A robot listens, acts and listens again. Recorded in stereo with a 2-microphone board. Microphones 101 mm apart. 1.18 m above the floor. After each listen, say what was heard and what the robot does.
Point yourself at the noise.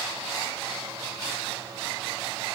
Keep listening.
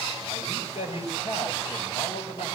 The man speaking: about 75° left or 105° left. Turn 75° left.
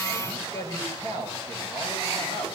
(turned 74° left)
So it is at 35° left. Turn 35° left.
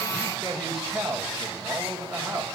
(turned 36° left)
Facing the man speaking, over 4 m away.